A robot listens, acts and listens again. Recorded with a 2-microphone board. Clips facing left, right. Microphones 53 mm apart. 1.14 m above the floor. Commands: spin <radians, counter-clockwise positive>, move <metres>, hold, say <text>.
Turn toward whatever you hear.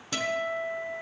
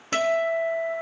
spin -0.79
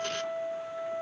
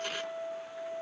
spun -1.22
spin 0.35
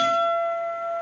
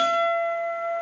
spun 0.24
say Facing the guitar, 1 to 2 m away.